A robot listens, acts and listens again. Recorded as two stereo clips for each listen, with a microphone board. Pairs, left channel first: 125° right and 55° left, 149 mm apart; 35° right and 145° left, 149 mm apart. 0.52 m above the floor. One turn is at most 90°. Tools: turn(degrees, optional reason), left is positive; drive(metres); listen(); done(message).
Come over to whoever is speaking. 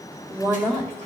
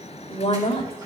drive(metres=1.0)
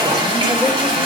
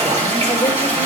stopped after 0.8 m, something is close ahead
listen()
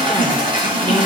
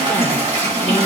listen()
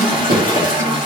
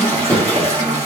done("Facing where the woman speaking came from. I can't hear it now. I did not reach it.")